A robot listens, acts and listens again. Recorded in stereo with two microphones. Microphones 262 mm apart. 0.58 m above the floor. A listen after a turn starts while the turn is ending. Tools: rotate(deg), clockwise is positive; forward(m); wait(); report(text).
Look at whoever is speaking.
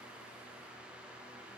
wait()
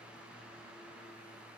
wait()
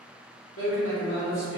rotate(-50)
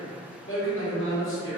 rotate(-65)
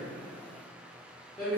report("Found it: a man speaking, straight ahead, 1 to 2 m away.")